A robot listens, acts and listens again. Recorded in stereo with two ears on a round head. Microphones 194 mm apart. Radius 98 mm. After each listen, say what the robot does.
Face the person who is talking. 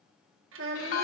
Turn 65° right.
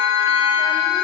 Keep listening.
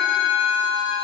Keep listening.
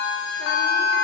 I heard a child speaking, but can't make it out now. It was about straight ahead or 50° right.